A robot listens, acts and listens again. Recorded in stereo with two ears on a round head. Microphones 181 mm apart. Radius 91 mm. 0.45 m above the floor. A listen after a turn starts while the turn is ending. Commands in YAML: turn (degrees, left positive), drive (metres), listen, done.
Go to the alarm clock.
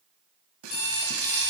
turn: 55
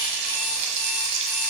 listen: true
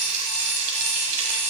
listen: true
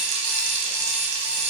done: "I heard an alarm clock, but can't make it out now. It was about straight ahead or 70° left. I did not reach it."